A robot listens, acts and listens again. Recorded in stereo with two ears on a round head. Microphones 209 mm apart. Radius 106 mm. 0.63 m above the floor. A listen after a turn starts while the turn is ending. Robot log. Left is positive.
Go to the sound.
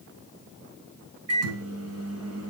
note: The microwave: about 65° right or 115° right.
cmd yaw -65
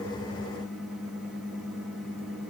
cmd fwd 1.0
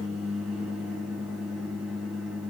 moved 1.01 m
cmd fwd 1.0
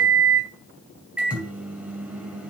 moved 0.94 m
cmd fwd 1.0
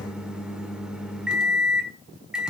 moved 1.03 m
cmd fwd 1.0
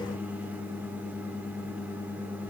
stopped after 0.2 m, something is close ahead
note: The microwave is now 10° right.
cmd yaw -10
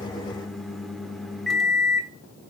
end: I am next to the microwave.